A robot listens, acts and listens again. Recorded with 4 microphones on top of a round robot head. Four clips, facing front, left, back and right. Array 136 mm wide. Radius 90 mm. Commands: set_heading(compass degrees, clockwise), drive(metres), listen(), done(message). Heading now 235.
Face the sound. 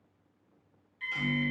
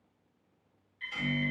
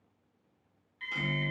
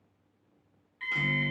set_heading(355)
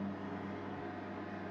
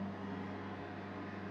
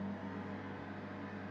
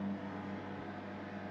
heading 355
set_heading(345)
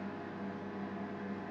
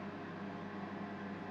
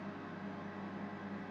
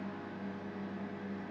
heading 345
done("Facing the microwave, under 1 m away.")